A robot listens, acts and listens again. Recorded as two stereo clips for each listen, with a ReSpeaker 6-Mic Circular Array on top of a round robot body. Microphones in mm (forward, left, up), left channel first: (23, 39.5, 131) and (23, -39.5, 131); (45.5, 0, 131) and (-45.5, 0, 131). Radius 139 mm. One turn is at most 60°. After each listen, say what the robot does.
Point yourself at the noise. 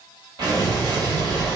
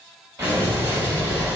Turn 60° right.
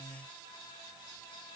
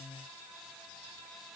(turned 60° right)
Turn 60° right.
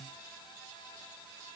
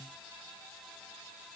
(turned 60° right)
I heard an explosion from this way, but can't make it out now.